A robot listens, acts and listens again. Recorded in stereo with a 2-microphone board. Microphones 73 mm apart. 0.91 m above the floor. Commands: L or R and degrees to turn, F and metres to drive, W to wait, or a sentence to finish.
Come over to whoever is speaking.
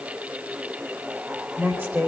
R30
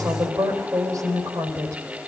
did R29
R120
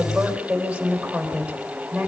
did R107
R10
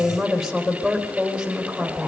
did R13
F1.0
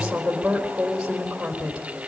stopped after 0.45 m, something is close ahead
R10
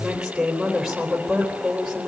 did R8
Blocked. The woman speaking is further on, straight ahead.